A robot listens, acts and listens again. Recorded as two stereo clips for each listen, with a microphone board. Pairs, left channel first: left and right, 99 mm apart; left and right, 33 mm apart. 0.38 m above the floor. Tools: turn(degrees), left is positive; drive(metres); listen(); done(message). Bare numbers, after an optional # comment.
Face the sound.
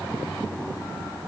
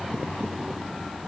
listen()
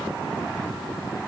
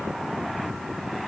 listen()
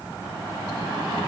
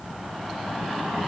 done("I can't make out anything.")